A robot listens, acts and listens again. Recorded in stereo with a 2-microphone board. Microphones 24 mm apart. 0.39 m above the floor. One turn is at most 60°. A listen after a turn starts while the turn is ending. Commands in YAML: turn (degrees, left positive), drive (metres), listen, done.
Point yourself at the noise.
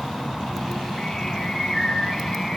turn: 30
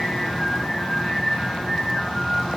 done: "Found it: singing, straight ahead, over 4 m away."